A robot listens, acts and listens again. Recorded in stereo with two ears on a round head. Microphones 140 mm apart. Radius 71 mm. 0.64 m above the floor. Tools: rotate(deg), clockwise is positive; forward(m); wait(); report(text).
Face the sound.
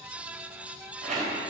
rotate(50)
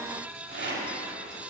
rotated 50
rotate(80)
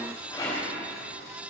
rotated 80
rotate(-25)
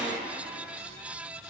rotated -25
wait()
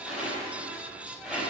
rotate(10)
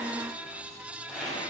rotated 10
report("Found it: a rattle, straight ahead.")